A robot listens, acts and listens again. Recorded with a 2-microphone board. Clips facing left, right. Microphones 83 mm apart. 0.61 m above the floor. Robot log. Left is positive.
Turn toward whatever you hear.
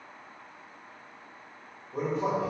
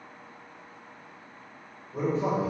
note: The man speaking: about 40° left or 140° left.
cmd yaw +40
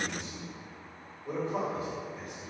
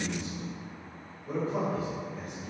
note: So it is at 95° left.
cmd yaw +95
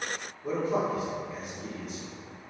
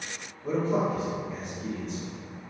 note: The man speaking is now 10° left.
cmd yaw +10
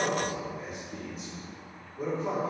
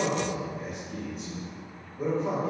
end: Facing the man speaking, 1 to 2 m away.